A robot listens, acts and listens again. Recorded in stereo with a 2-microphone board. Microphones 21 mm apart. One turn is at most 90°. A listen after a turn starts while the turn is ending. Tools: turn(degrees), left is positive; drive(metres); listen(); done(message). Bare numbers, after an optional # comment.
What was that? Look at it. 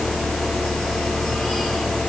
listen()
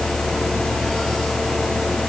listen()
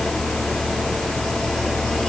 done("I can't make out anything to turn to.")